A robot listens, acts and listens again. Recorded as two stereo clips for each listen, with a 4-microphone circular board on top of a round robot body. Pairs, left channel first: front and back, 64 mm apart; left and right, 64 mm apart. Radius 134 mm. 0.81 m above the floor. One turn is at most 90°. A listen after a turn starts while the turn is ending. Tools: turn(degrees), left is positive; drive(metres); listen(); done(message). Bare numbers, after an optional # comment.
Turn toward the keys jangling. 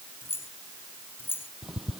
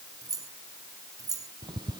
# The keys jangling: 60° right.
turn(-60)
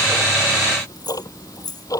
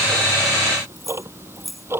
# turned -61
done("Found it: keys jangling, straight ahead.")